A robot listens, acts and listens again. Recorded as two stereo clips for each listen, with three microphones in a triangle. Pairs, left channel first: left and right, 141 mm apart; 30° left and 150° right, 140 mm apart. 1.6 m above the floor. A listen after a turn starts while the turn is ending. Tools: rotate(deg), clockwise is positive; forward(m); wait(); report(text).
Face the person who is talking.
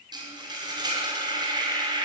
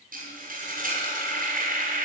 wait()
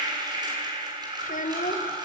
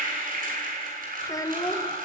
rotate(-90)
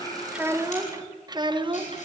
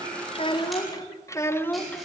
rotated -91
rotate(50)
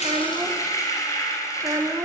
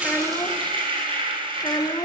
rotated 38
rotate(25)
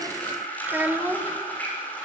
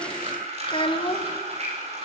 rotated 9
rotate(15)
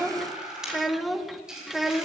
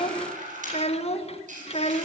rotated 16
report("Facing the child speaking.")